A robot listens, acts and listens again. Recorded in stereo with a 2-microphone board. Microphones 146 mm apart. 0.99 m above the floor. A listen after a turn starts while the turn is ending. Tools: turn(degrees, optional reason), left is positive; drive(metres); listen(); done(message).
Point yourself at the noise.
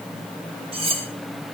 turn(degrees=-40, reason="The cutlery clinking: about 40° right or 140° right.")
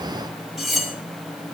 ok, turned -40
done("Found it: cutlery clinking, straight ahead, 1 to 2 m away.")